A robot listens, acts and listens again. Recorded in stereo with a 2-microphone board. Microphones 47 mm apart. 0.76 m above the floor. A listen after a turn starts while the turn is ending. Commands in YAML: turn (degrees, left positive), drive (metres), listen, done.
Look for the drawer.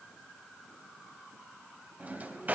turn: -35
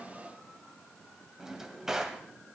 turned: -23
turn: -15
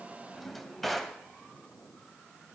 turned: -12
done: "Found it: a drawer, straight ahead."